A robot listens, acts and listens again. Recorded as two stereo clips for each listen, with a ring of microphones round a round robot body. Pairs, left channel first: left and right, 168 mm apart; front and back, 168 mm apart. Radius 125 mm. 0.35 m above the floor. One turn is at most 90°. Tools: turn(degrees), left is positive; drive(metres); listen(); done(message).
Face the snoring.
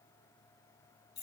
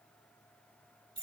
listen()
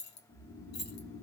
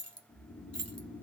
turn(degrees=45)
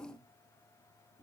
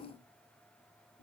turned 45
done("Found it: snoring, straight ahead.")